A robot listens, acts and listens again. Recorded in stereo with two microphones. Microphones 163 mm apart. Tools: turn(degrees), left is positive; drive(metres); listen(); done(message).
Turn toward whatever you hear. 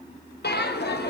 turn(degrees=90)
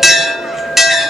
done("Facing the bell, under 1 m away.")